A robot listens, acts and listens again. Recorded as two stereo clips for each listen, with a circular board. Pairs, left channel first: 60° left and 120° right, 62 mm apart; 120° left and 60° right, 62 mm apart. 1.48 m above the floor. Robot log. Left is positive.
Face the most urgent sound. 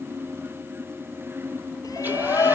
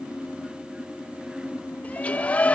note: The shout: 55° left.
cmd yaw +55
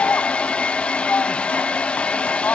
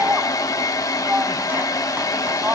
end: Found it: a shout, straight ahead.